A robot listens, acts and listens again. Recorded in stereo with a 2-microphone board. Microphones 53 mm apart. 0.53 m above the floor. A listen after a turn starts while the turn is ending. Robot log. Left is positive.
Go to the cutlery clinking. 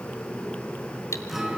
note: The cutlery clinking: about 60° left or 120° left.
cmd yaw +60
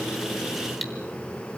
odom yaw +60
cmd fwd 1.0
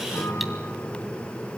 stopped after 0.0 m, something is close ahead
cmd idle
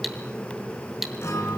end: Something is in my way. I am facing the cutlery clinking but have not reached it.